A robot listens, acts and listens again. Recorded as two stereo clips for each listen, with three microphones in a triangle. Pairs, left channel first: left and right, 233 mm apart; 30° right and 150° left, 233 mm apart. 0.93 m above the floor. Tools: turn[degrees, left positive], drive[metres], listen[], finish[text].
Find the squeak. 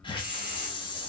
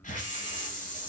Action: listen[]
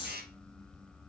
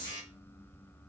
Action: listen[]
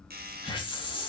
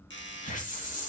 Action: finish[I can't make out a squeak, only a doorbell and a hiss.]